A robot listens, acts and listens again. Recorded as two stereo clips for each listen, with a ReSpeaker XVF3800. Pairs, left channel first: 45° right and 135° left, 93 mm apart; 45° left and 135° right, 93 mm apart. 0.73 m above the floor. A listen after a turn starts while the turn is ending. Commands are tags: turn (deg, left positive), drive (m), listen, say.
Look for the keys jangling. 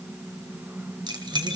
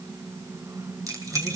<turn deg="170"/>
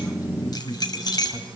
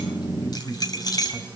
<say>Facing the keys jangling.</say>